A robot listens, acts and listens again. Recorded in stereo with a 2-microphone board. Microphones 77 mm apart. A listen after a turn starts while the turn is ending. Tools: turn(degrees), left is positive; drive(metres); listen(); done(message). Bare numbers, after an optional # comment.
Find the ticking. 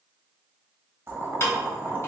# The ticking: about 35° left or 145° left.
turn(35)
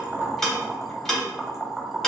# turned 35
done("Facing the ticking.")